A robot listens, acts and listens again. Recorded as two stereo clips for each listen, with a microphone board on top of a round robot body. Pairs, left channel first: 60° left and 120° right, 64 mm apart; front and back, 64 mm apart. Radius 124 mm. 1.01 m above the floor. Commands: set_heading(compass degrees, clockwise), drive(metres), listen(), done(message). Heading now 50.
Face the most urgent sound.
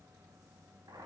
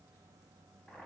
listen()
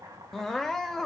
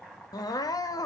set_heading(75)
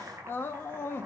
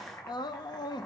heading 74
done("Found it: crying, straight ahead, under 1 m away.")